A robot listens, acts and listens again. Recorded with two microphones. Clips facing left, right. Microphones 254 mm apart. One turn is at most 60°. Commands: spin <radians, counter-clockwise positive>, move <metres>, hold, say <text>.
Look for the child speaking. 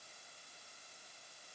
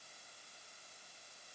hold
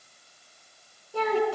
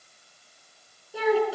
spin -0.52
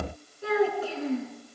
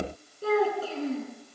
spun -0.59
spin -1.05
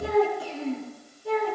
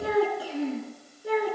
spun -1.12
spin -1.05
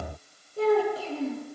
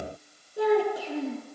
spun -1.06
spin -0.26
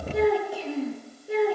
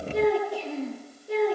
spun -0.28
say Found it: a child speaking, straight ahead.